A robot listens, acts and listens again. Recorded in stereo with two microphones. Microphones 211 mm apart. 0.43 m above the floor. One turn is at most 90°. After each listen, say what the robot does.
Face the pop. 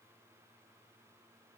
Keep listening.
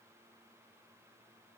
Keep listening.
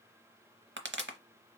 Turn 65° right.
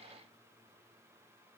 Keep listening.
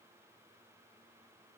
I heard a pop, but can't make it out now. It was about straight ahead or 50° right.